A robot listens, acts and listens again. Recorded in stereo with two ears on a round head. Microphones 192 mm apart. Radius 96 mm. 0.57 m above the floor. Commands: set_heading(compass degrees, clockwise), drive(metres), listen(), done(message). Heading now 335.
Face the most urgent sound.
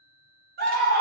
set_heading(20)
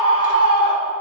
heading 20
done("Facing the scream, 1 to 2 m away.")